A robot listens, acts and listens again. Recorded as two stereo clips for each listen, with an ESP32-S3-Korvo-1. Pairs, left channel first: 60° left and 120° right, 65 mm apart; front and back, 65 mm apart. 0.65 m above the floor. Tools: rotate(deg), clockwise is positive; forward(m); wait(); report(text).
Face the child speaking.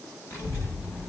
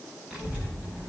rotate(-115)
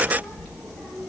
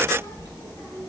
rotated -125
report("Found it: a child speaking, straight ahead.")